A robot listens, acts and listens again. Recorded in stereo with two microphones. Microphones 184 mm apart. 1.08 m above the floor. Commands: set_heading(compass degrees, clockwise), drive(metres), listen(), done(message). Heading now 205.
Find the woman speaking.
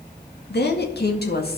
set_heading(150)
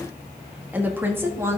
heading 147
set_heading(162)
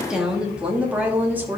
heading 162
set_heading(172)
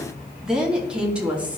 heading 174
set_heading(184)
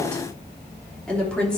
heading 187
done("Found it: a woman speaking, straight ahead, 2 to 4 m away.")